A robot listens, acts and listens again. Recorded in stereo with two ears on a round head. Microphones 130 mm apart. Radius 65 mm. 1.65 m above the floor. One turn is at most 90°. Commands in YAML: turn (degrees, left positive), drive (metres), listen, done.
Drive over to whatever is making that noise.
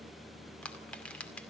turn: 30
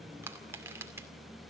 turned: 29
turn: -20
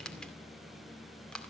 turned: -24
drive: 1.0
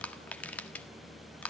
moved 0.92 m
turn: 15
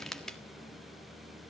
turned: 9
drive: 1.0
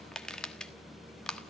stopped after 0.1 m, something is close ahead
turn: 10
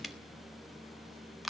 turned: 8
done: "Arrived at the crushing, straight ahead."